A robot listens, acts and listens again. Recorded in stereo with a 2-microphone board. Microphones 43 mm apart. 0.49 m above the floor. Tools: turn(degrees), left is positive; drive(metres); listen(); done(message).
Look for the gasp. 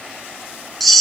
listen()
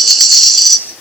listen()
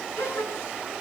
turn(degrees=90)
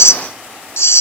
done("Facing where the gasp came from. I can't hear it now.")